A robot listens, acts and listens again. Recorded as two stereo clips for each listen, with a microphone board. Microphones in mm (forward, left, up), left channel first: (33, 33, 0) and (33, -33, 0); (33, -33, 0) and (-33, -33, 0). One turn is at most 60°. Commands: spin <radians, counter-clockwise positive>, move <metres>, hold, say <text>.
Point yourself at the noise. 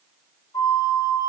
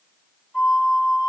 spin 1.05
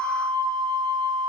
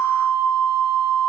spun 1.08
spin 0.17
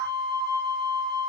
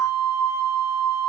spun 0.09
say Facing the flute, 2 to 4 m away.